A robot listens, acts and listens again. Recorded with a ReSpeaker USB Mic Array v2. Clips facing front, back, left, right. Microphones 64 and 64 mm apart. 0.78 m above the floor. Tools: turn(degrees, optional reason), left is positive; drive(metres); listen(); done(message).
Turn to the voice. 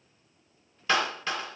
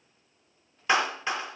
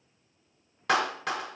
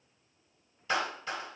listen()
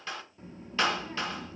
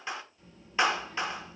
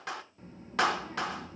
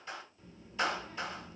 turn(degrees=50, reason="The child speaking: 50° left.")
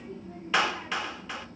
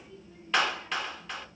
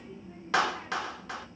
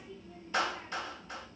turn(degrees=25, reason="The child speaking is now 25° left.")
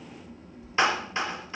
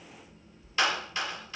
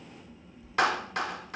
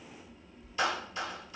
done("Facing the child speaking.")